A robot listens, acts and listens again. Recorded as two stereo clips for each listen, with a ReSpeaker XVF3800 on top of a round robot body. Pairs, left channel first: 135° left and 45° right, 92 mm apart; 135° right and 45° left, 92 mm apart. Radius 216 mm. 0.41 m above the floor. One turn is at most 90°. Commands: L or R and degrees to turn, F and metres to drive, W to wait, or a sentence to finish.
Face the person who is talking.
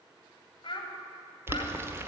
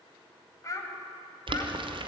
L90
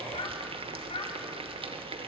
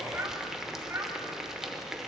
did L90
L90
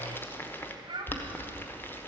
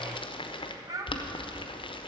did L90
Found it: a child speaking, straight ahead, 2 to 4 m away.